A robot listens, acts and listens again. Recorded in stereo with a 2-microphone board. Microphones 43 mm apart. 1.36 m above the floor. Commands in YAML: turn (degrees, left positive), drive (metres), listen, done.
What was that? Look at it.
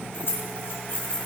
turn: 55
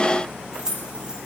turn: -20
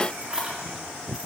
turn: -20
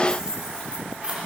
turn: -30
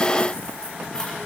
listen: true
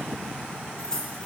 turn: 15
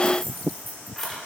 done: "Facing the keys jangling."